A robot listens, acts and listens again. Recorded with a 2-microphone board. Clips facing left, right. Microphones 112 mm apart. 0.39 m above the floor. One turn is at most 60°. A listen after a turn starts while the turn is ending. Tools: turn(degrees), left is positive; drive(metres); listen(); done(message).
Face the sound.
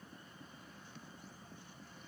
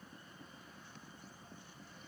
listen()
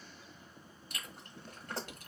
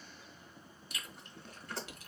turn(degrees=50)
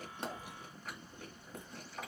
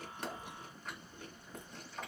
done("Found it: chewing, straight ahead.")